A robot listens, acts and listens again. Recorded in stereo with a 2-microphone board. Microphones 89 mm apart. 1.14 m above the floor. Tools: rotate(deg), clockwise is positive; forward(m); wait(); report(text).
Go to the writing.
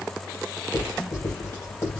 rotate(-35)
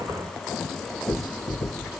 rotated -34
rotate(-110)
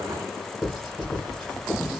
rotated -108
forward(1.0)
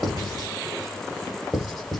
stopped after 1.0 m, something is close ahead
report("Arrived at the writing, straight ahead.")